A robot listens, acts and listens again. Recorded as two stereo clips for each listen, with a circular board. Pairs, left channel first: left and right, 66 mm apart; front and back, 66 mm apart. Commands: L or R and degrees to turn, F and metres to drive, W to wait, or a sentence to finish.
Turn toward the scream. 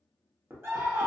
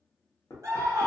R140
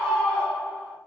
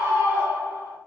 L20
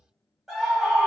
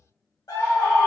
Facing the scream.